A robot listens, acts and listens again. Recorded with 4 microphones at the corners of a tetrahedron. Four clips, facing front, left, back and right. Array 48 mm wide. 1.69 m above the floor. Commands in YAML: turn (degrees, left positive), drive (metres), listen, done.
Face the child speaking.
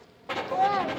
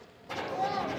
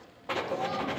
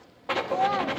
turn: -30
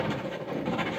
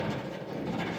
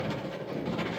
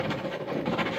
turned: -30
listen: true
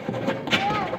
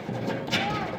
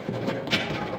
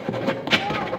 listen: true
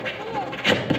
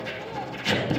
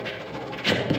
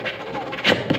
done: "I heard a child speaking from this way, but can't make it out now."